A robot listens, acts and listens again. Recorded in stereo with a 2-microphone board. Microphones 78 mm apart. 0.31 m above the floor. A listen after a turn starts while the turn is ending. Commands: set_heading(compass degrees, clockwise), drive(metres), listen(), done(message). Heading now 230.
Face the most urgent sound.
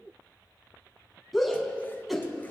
set_heading(200)
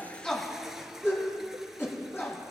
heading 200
set_heading(50)
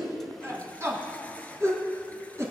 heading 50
set_heading(95)
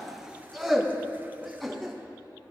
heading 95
done("Found it: a shout, straight ahead, 2 to 4 m away.")